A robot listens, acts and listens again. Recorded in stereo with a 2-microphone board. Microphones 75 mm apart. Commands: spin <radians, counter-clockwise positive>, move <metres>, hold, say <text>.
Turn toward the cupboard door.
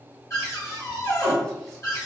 spin 0.79
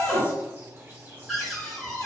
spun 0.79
say Facing the cupboard door.